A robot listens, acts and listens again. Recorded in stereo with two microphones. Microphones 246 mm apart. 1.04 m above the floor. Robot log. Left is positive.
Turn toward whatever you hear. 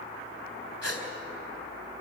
cmd yaw +90
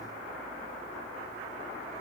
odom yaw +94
end: I heard a gasp from this way, but can't make it out now.